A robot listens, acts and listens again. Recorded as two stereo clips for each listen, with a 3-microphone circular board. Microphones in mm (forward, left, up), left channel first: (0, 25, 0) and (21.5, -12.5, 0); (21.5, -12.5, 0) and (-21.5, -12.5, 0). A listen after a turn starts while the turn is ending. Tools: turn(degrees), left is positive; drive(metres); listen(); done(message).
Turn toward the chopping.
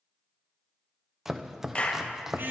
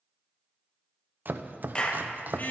turn(degrees=-140)
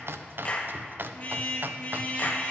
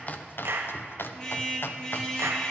turn(degrees=-25)
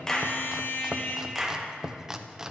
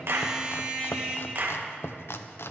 turn(degrees=20)
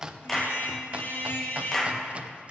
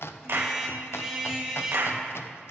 done("Facing the chopping, under 1 m away.")